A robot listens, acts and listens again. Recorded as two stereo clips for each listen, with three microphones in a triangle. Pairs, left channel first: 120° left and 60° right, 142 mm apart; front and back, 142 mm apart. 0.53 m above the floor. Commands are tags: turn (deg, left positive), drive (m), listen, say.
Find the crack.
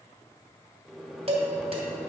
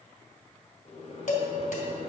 <listen/>
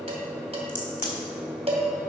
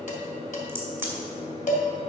<turn deg="105"/>
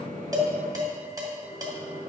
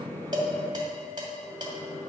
<say>I heard a crack from this way, but can't make it out now.</say>